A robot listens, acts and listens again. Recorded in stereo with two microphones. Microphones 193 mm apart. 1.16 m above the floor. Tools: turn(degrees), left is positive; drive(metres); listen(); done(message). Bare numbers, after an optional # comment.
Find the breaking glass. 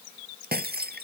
# The breaking glass: about 60° right or 120° right.
turn(-60)
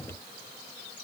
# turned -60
listen()
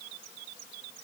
done("I heard breaking glass, but can't make it out now. It was about straight ahead or 60° right.")